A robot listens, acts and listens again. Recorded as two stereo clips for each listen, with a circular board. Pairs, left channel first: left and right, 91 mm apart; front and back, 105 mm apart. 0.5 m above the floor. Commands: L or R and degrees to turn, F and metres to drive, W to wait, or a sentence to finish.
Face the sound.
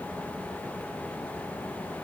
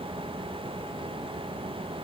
W
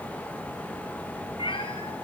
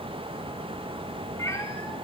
L60
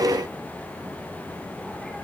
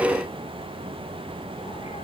W
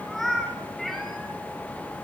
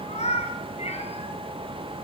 Found it: a cat meowing, straight ahead, over 4 m away.